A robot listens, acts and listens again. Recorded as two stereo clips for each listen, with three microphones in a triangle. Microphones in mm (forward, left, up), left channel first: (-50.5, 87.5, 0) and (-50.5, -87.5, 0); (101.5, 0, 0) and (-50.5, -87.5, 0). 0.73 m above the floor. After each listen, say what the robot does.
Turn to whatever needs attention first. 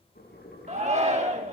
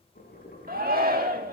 Turn 135° right.
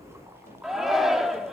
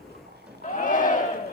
Facing the shout, 1 to 2 m away.